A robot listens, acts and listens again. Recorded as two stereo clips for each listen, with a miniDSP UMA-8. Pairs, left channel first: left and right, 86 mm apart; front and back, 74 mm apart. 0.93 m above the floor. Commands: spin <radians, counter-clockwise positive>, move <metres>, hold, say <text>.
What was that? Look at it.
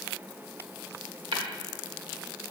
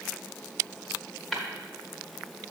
spin -1.57
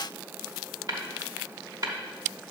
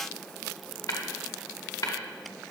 spin -0.79
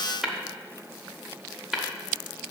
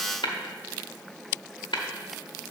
say Found it: tapping, straight ahead, 1 to 2 m away.